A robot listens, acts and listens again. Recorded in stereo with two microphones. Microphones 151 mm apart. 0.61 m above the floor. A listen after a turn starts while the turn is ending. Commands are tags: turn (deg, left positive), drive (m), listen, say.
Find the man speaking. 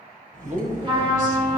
<turn deg="-60"/>
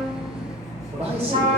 <turn deg="-50"/>
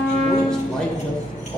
<say>Found it: a man speaking, straight ahead, 2 to 4 m away.</say>